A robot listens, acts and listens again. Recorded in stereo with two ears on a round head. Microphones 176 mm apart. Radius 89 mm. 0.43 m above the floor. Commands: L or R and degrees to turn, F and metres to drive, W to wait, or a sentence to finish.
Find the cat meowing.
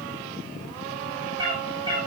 R25
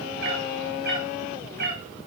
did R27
R120
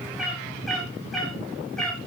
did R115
Facing the cat meowing.